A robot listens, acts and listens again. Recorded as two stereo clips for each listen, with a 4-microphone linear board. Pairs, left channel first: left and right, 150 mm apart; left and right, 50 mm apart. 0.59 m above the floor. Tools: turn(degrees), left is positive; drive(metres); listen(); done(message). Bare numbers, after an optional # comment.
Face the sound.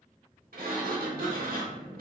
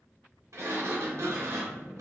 turn(-90)
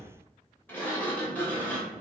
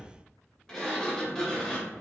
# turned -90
# So it is at 10° left.
turn(10)
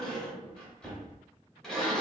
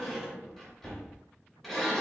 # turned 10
done("Found it: a sliding door, straight ahead.")